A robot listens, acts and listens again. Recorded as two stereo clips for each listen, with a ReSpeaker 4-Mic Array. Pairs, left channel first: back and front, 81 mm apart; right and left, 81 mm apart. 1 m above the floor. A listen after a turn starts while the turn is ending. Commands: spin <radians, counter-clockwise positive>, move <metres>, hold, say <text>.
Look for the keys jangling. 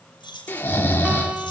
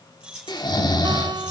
spin 2.88
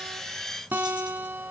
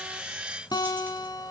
hold
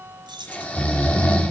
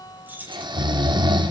spin 0.35
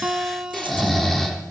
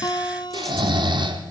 hold
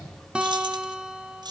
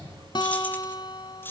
spin -0.52
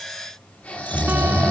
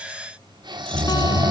hold
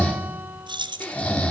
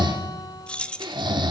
spin -0.26
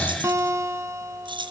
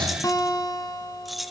say Found it: keys jangling, straight ahead, 1 to 2 m away.